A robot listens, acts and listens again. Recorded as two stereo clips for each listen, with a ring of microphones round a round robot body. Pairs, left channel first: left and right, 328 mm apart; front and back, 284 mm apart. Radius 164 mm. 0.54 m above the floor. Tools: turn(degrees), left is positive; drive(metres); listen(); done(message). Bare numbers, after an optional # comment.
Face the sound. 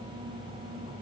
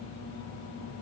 listen()
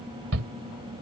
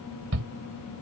# The shout: 135° right.
turn(-135)
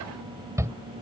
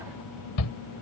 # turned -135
# The shout is now 10° right.
turn(-10)
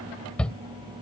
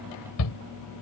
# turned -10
done("Facing the shout.")